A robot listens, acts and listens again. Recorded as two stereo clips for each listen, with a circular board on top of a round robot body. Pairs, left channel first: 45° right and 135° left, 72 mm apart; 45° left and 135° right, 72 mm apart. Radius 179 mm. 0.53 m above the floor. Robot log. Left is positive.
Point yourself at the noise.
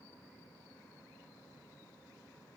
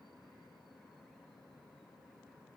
cmd idle
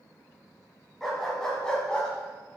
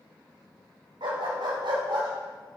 note: The dog barking: 120° right.
cmd yaw -120
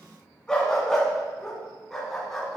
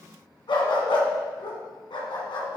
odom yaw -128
note: The dog barking is now 35° left.
cmd yaw +35
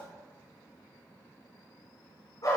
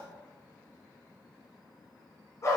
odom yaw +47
end: Found it: a dog barking, straight ahead.